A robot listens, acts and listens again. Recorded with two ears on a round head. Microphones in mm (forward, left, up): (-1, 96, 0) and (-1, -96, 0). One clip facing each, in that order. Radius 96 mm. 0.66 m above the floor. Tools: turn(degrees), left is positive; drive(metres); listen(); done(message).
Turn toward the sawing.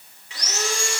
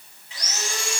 turn(degrees=55)
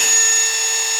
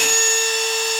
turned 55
turn(degrees=10)
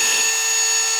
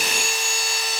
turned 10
done("Facing the sawing.")